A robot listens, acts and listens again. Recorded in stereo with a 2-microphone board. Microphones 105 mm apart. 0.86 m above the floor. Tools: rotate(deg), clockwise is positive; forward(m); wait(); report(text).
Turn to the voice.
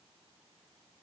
wait()
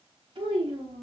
rotate(60)
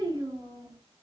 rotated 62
rotate(35)
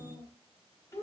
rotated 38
rotate(-30)
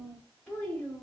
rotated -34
rotate(-10)
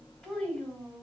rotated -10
report("Found it: a child speaking, straight ahead.")